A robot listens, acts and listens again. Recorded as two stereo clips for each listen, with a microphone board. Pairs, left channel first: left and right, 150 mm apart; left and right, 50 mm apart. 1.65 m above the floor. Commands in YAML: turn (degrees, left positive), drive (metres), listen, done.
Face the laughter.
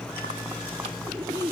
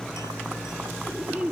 turn: -25
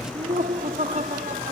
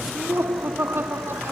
turn: -120
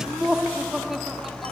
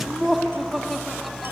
done: "Found it: laughter, straight ahead."